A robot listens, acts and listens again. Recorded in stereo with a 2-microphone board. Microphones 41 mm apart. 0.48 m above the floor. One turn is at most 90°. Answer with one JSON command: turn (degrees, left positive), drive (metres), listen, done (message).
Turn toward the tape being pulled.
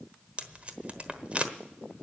{"turn": -30}
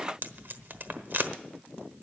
{"turn": -90}
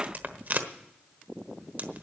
{"turn": -60}
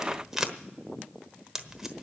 {"turn": -15}
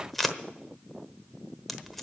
{"done": "Facing the tape being pulled."}